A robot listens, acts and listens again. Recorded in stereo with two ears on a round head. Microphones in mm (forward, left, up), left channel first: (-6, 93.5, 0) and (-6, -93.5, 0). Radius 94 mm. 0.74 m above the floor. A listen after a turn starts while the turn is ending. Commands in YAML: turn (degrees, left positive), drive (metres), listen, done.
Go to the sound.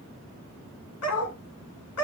turn: 90
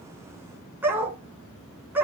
turn: -10
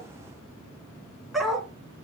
drive: 1.0
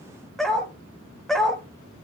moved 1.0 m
drive: 1.0
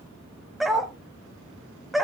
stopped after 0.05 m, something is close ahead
done: "Arrived at the dog barking, straight ahead."